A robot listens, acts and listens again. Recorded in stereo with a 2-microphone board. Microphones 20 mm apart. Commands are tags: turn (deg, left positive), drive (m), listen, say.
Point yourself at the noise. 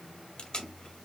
<turn deg="50"/>
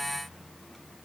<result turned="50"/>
<listen/>
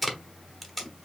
<say>Found it: tape being pulled, straight ahead, 1 to 2 m away.</say>